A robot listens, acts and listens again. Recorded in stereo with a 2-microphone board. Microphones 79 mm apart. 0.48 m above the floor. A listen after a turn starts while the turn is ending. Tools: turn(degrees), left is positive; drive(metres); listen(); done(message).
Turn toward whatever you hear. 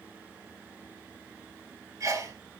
turn(degrees=-45)
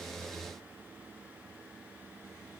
listen()
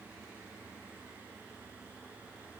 done("I heard a sneeze, but can't make it out now. It was about straight ahead or 90° right.")